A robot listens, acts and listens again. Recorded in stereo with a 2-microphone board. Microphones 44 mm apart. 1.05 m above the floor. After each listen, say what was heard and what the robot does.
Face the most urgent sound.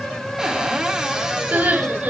The crying: about 40° right or 140° right. Turn 40° right.
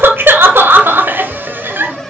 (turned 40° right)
So it is at 90° right. Turn 90° right.
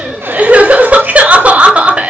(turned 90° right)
The crying is now 40° right. Turn 40° right.
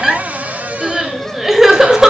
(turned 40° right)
The crying is now 10° right. Turn 10° right.
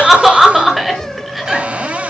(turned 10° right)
Found it: crying, straight ahead.